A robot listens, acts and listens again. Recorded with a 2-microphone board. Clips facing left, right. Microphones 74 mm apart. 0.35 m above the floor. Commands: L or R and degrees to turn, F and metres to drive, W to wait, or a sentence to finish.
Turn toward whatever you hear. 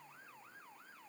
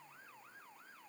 W
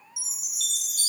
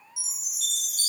L70
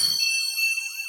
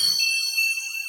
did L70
L30
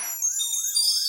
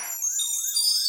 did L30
Facing the chime.